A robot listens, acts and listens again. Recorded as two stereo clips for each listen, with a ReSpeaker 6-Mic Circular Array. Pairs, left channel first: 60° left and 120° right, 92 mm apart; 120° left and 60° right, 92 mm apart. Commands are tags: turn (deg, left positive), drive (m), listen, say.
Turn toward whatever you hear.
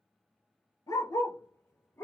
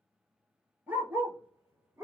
<say>Facing the dog barking, 1 to 2 m away.</say>